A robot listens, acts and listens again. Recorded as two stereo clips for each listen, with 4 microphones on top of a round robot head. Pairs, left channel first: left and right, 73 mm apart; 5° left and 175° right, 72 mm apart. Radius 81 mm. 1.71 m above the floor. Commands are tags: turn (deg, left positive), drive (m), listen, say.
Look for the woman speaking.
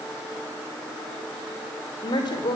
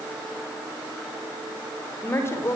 <turn deg="65"/>
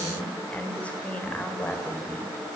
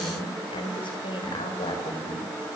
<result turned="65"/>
<turn deg="15"/>
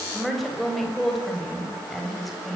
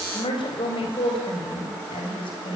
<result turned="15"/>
<say>Facing the woman speaking.</say>